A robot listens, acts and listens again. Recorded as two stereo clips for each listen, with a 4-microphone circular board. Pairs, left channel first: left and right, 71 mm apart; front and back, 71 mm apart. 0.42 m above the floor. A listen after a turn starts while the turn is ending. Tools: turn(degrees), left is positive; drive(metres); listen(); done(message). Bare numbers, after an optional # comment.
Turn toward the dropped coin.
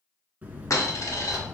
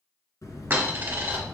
# The dropped coin: 120° left.
turn(120)
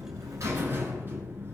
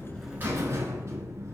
done("I heard a dropped coin from this way, but can't make it out now.")